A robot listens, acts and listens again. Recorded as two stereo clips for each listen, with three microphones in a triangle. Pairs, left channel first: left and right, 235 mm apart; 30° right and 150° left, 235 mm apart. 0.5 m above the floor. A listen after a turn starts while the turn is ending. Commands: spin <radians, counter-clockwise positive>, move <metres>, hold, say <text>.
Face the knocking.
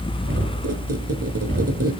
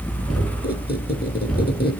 spin -2.09
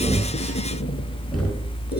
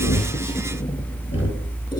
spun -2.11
say Facing the knocking.